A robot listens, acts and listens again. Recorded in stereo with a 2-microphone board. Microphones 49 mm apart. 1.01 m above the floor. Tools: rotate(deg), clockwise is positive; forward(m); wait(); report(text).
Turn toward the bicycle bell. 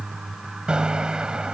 rotate(20)
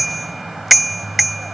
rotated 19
report("Found it: a bicycle bell, straight ahead.")